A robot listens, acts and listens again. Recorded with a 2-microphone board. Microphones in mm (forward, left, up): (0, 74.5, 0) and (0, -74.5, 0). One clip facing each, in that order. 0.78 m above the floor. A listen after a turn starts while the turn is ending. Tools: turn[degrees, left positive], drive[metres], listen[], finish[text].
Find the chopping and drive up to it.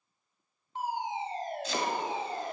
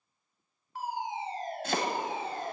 Thought: The chopping: about 60° right or 120° right.
Action: turn[-60]
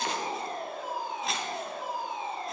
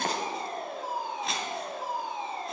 Action: drive[1.0]
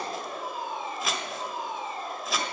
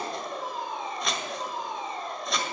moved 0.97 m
Action: drive[1.0]
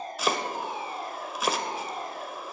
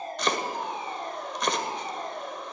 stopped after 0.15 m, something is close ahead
Action: finish[I am next to the chopping.]